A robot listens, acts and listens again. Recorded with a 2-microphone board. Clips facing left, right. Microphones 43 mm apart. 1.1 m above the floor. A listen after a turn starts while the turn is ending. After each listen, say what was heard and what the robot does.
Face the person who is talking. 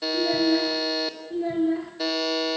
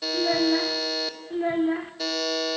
The child speaking: about 45° right or 135° right. Turn 45° right.
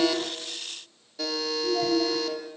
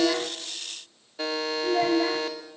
So it is at 85° right. Turn 85° right.
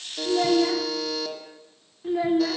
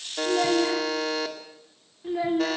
Found it: a child speaking, straight ahead, 1 to 2 m away.